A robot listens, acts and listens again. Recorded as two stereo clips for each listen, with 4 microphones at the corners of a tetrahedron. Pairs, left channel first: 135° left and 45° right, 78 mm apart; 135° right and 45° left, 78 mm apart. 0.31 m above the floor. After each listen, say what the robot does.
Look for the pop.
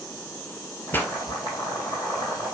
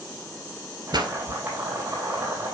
Turn 65° left.
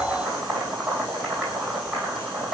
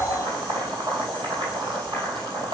Facing where the pop came from. I can't hear it now.